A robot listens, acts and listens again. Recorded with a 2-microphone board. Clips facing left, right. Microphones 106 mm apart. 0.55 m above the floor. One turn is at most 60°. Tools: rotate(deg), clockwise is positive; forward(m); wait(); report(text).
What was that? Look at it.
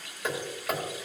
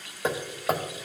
rotate(30)
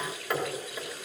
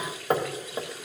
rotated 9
rotate(40)
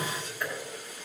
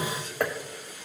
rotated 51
rotate(60)
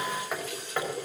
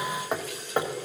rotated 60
rotate(30)
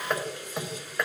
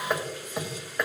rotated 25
report("Found it: hammering, straight ahead, 1 to 2 m away.")